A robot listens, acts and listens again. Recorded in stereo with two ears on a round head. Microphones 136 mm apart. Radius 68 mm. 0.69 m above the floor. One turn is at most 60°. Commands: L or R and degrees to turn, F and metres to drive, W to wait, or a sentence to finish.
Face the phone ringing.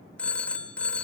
L30
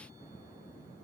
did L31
W
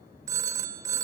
R20
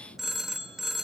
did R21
Found it: a phone ringing, straight ahead, 1 to 2 m away.